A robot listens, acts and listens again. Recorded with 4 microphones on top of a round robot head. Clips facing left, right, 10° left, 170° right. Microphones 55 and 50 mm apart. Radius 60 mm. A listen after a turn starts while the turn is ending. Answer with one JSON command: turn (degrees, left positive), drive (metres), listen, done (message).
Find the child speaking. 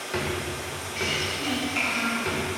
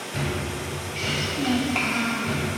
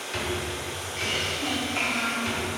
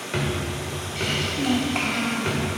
{"turn": -140}
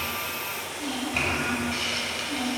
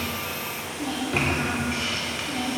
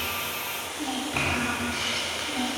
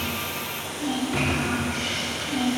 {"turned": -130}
{"turn": -40}
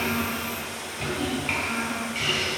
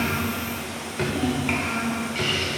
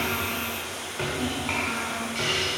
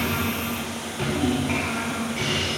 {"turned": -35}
{"turn": -10}
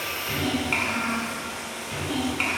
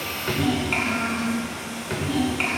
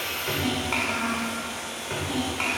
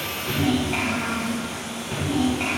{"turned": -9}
{"done": "Facing the child speaking, 2 to 4 m away."}